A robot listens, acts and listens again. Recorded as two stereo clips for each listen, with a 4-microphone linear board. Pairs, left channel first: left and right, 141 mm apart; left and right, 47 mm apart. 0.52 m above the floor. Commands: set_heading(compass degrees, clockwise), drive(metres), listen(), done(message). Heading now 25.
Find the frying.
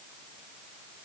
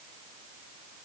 listen()
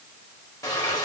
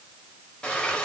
set_heading(0)
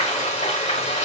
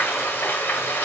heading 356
set_heading(231)
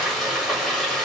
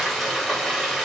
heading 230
done("Found it: frying, straight ahead, 1 to 2 m away.")